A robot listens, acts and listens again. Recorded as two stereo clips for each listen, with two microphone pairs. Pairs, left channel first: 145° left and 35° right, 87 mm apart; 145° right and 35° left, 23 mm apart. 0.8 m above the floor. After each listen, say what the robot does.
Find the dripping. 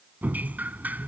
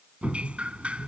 Turn 35° left.
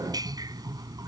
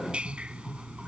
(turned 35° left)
Facing the dripping.